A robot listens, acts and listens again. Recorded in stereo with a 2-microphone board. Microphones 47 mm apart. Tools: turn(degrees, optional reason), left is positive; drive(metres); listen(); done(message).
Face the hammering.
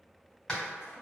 turn(degrees=30)
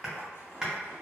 turn(degrees=-15, reason="So it is at 15° right.")
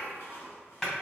done("Facing the hammering.")